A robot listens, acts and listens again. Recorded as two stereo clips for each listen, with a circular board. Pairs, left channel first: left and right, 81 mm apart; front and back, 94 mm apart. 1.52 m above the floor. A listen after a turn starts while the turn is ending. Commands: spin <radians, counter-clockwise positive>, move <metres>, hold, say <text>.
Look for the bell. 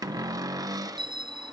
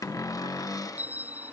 spin -1.83
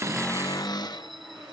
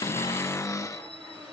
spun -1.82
hold
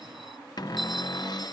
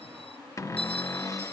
hold
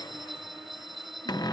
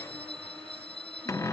say Found it: a bell, straight ahead.